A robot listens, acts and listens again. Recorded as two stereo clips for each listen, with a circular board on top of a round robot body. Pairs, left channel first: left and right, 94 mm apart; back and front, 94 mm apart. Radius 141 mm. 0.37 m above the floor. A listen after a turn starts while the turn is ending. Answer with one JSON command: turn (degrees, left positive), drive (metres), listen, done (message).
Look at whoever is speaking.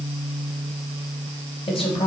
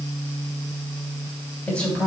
{"turn": 105}
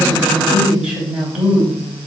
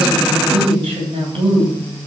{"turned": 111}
{"done": "Facing the woman speaking, 2 to 4 m away."}